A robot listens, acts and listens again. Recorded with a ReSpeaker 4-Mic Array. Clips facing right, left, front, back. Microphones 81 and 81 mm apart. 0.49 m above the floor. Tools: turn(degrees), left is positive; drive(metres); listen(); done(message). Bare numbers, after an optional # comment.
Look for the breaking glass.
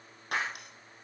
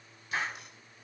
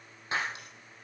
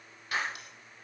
# The breaking glass: 65° right.
turn(-65)
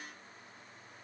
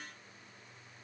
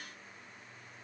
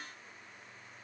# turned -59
done("Facing where the breaking glass came from. I can't hear it now.")